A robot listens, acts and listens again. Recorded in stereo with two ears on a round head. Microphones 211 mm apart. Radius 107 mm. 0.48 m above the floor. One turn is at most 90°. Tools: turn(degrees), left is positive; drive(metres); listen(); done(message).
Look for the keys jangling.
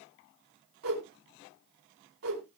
listen()
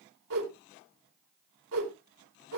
listen()
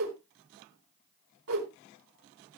done("I can't make out keys jangling to turn to.")